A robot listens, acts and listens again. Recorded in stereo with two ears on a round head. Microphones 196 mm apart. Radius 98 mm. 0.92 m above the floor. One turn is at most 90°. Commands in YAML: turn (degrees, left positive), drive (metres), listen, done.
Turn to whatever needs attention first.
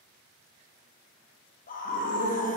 turn: 40
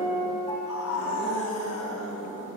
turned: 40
turn: 90
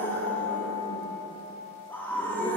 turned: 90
turn: 10
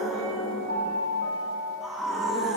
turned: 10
done: "Facing the scream."